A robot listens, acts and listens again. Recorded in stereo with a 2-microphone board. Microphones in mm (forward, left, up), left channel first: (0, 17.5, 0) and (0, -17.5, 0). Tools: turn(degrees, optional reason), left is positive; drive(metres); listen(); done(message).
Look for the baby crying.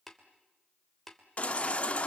turn(degrees=40, reason="The baby crying: about 40° left or 140° left.")
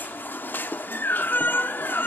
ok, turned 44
turn(degrees=95, reason="So it is at 95° left.")
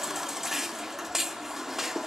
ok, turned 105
turn(degrees=-10, reason="The baby crying is now 10° right.")
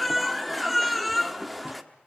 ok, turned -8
done("Facing the baby crying.")